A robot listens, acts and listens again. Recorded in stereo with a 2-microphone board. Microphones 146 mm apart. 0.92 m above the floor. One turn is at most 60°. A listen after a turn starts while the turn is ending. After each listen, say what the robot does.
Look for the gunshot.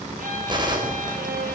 Turn 30° right.
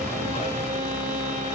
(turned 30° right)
Keep listening.
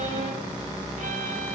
I heard a gunshot, but can't make it out now. It was about straight ahead or 120° right.